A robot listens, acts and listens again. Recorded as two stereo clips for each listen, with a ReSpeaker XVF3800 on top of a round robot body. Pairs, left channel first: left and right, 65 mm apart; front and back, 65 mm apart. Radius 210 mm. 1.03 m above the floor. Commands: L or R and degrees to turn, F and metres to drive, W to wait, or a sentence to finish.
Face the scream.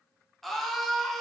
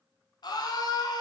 Found it: a scream, straight ahead.